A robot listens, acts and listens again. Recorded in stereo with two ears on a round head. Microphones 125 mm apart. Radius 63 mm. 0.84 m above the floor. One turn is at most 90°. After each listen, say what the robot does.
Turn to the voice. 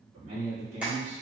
Turn 50° right.
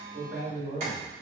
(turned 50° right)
Turn 30° right.
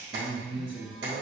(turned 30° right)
Turn 35° right.
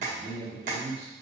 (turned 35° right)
Turn 35° right.
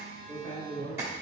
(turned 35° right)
Turn 15° right.
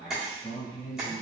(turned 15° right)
Facing the man speaking.